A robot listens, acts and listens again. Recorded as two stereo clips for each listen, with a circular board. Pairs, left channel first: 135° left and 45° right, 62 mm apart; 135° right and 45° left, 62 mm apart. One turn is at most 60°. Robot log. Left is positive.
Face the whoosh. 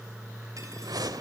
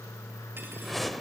note: The whoosh: 45° right.
cmd yaw -45
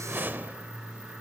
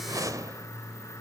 note: The whoosh is now 15° left.
cmd yaw +15
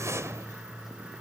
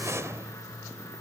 end: Facing the whoosh.